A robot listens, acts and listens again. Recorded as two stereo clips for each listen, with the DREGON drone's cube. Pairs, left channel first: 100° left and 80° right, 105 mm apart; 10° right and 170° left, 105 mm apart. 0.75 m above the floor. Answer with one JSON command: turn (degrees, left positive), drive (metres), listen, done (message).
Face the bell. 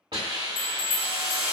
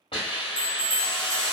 {"turn": 60}
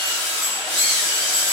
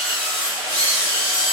{"listen": true}
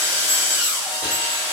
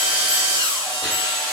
{"listen": true}
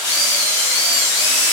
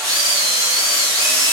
{"done": "I heard a bell from this way, but can't make it out now."}